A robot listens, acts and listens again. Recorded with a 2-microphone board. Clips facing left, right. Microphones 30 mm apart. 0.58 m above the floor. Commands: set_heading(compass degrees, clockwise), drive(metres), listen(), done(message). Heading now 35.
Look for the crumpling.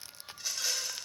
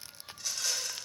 listen()
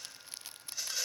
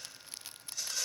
listen()
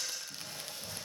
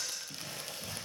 set_heading(105)
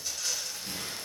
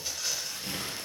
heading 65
set_heading(145)
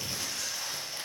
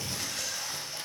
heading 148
done("Facing the crumpling, over 4 m away.")